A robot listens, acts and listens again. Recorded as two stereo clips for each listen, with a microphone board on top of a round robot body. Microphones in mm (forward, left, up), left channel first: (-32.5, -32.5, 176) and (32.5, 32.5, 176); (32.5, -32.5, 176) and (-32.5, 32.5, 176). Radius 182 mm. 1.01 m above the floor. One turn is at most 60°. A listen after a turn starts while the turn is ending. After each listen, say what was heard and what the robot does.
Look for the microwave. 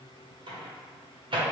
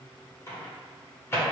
The microwave: 20° left. Turn 20° left.
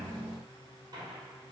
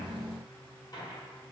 Keep listening.
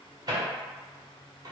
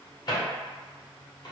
Found it: a microwave, straight ahead, under 1 m away.